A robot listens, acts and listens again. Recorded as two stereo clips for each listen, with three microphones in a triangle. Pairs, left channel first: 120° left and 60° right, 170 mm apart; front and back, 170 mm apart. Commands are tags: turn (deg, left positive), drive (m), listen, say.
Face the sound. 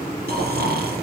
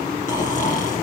<turn deg="-40"/>
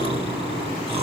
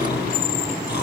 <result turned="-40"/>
<say>Found it: snoring, straight ahead, 2 to 4 m away.</say>